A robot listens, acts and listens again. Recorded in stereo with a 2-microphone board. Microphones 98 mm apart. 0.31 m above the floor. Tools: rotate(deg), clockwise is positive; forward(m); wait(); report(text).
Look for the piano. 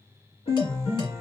rotate(-90)
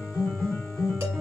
report("Facing the piano, 1 to 2 m away.")